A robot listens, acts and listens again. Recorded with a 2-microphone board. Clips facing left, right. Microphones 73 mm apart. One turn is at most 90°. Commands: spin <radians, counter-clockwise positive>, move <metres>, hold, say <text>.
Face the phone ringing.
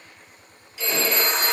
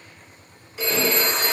spin -0.96
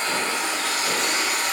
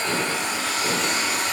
hold
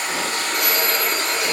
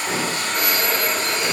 say Facing the phone ringing.